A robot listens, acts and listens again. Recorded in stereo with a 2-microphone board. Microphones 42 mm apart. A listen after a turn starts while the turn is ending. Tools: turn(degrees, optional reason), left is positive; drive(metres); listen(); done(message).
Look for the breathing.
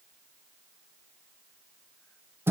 listen()
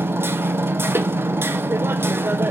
listen()
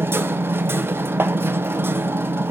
done("I can't make out breathing to turn to.")